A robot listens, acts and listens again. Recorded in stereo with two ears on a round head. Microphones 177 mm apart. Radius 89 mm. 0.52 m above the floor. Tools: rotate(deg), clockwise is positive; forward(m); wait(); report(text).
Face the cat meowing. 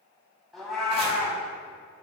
rotate(-30)
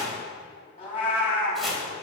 rotate(-150)
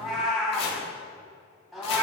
report("Found it: a cat meowing, straight ahead.")